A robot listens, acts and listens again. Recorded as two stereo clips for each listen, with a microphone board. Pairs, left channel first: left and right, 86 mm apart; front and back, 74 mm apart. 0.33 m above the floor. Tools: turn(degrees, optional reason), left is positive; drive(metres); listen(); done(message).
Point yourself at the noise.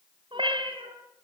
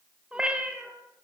turn(degrees=-100, reason="The cat meowing: 100° right.")
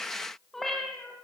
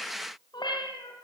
done("Facing the cat meowing, 2 to 4 m away.")